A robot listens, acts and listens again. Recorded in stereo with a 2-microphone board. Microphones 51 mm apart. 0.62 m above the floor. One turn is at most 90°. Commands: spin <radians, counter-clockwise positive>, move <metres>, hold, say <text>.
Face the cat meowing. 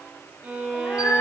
spin 1.22
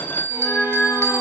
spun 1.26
spin 0.61
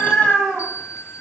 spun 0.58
say Found it: a cat meowing, straight ahead.